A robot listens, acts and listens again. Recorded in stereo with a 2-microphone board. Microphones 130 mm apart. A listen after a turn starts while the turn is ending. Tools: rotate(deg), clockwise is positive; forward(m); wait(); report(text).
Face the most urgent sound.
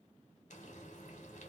wait()
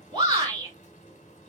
rotate(45)
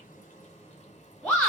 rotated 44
report("Found it: a shout, straight ahead.")